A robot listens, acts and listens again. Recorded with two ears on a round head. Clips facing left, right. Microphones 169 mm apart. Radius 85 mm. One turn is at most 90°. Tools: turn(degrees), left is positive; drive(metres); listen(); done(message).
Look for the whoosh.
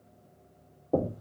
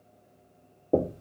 listen()
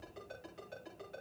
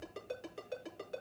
listen()
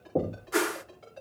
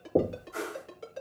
turn(degrees=90)
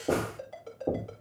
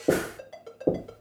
listen()
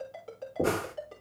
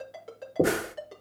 turn(degrees=-15)
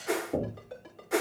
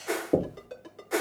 done("Facing the whoosh, under 1 m away.")